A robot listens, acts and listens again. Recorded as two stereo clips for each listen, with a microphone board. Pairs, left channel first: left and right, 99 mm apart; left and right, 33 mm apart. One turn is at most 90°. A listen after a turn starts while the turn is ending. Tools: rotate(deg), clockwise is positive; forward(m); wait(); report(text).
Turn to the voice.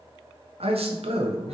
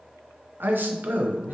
rotate(90)
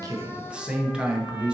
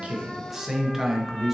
rotate(10)
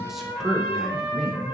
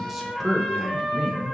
report("Found it: a man speaking, straight ahead, under 1 m away.")